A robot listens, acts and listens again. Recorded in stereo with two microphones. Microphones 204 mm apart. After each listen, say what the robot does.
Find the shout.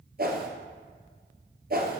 Keep listening.
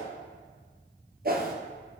Keep listening.
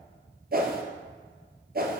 I can't make out a shout, only a whoosh.